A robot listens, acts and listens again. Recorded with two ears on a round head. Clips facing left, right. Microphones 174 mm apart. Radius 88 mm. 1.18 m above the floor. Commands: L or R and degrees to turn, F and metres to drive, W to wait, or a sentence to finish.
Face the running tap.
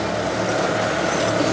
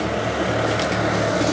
W
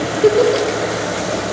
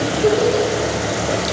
W
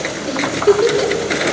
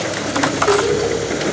I can't make out a running tap, only a giggle.